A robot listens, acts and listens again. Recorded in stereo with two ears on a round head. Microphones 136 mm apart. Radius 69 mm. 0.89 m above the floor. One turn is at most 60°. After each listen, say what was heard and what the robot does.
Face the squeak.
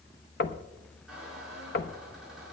Turn 30° right.
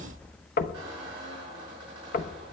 So it is at 145° right. Turn 60° right.
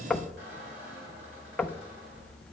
The squeak is now 85° right. Turn 60° right.
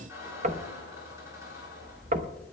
The squeak is now 20° right. Turn 20° right.
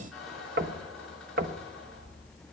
Facing the squeak.